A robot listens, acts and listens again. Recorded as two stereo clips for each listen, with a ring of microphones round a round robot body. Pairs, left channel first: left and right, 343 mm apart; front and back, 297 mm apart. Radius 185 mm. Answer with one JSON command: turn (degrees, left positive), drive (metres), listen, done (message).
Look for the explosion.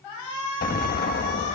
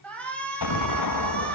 {"turn": 25}
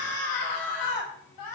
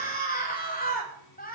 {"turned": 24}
{"done": "Facing where the explosion came from. I can't hear it now."}